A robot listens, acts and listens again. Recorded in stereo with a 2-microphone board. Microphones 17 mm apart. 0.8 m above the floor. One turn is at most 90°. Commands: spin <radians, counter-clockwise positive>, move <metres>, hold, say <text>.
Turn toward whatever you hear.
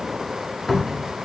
spin 0.52
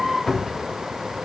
spin 1.57
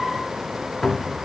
spin 0.26
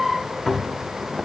say Facing the cupboard door, under 1 m away.